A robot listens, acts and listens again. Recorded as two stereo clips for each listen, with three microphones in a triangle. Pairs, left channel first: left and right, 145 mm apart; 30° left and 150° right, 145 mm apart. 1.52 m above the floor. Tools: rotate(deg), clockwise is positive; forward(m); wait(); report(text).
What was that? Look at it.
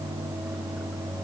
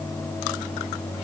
wait()
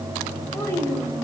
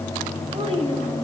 rotate(-160)
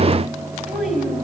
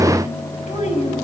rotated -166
report("Found it: a child speaking, straight ahead.")